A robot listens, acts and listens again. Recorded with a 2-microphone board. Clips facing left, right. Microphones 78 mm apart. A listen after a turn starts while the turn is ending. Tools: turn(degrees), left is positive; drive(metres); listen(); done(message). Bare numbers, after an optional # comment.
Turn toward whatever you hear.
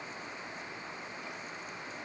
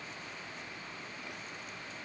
listen()
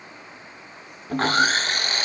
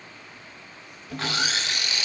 # The sawing: about 45° left or 135° left.
turn(45)
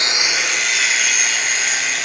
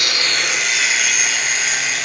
done("Found it: sawing, straight ahead, 1 to 2 m away.")